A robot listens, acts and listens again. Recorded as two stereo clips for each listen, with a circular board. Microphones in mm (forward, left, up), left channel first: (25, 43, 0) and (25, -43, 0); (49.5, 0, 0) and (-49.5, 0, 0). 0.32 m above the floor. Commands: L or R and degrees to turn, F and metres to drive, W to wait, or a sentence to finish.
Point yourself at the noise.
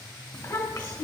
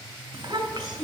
L130
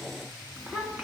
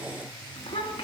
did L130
Facing the child speaking.